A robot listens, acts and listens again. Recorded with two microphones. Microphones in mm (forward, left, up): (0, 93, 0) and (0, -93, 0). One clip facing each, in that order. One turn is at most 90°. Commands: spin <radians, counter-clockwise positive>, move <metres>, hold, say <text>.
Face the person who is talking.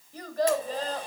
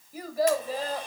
spin -0.52
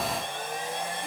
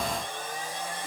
hold
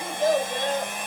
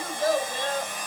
spin 0.35
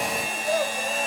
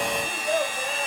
say Found it: a child speaking, straight ahead.